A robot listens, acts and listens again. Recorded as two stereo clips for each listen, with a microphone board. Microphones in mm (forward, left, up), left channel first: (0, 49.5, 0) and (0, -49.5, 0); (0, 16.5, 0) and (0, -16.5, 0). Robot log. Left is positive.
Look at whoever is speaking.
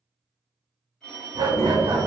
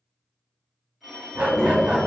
note: The child speaking: about 25° left or 155° left.
cmd yaw +25
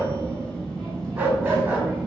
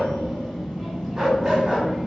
note: So it is at 10° left.
cmd yaw +10
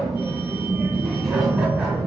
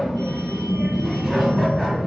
end: Found it: a child speaking, straight ahead.